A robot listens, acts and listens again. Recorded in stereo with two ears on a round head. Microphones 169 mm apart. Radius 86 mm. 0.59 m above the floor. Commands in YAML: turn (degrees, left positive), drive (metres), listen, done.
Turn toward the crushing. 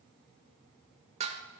listen: true
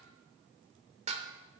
listen: true
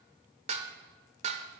done: "I can't make out crushing, only dishes clattering."